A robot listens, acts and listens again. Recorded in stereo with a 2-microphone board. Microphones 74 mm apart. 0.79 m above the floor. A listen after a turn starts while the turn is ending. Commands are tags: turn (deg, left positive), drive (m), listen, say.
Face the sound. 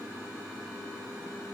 <listen/>
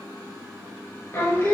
<turn deg="40"/>
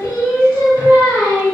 <turn deg="95"/>
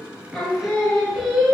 <say>Found it: singing, straight ahead, 1 to 2 m away.</say>